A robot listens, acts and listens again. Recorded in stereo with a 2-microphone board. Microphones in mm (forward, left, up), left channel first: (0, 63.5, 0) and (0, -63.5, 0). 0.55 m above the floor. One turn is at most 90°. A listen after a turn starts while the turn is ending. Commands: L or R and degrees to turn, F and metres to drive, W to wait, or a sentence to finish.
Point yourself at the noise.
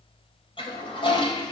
L45
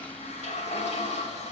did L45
L85
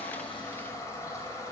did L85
L25
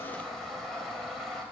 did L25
Found it: a toilet flushing, straight ahead, 2 to 4 m away.